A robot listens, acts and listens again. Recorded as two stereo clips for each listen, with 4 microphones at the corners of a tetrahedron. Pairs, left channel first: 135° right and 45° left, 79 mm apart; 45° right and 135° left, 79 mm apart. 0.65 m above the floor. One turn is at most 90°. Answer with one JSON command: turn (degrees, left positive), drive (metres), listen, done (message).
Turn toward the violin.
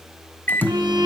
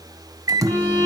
{"turn": 20}
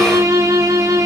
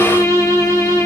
{"done": "Found it: a violin, straight ahead."}